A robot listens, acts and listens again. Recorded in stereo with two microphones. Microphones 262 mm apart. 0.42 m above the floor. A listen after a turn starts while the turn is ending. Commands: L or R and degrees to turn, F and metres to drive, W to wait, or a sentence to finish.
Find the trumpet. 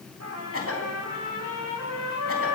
R90
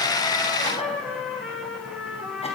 Found it: a trumpet, straight ahead, over 4 m away.